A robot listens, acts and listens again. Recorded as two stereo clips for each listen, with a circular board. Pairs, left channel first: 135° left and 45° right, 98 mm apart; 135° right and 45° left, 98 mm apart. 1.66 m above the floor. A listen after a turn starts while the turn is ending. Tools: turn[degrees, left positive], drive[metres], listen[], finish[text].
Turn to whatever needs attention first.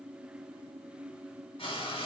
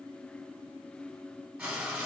Action: listen[]
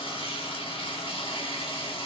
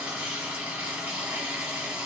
Action: listen[]
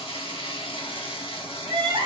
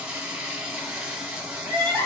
Action: finish[Facing the crying.]